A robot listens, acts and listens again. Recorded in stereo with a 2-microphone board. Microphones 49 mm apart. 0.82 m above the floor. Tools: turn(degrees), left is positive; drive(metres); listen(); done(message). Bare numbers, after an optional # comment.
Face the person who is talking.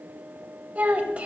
# The child speaking: about 25° right or 155° right.
turn(-25)
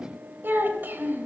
# The child speaking: about 35° right or 145° right.
turn(-35)
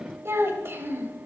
# So it is at 125° right.
turn(-125)
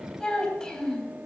# The child speaking is now 10° left.
turn(10)
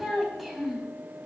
done("Facing the child speaking.")